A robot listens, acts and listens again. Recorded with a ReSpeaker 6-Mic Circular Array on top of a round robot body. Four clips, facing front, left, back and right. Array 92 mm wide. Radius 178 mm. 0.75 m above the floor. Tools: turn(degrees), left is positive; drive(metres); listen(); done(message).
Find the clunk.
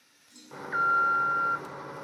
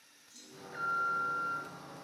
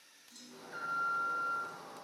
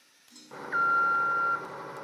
turn(degrees=-100)
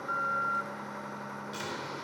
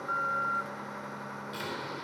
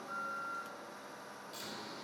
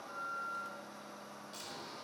done("I heard a clunk from this way, but can't make it out now.")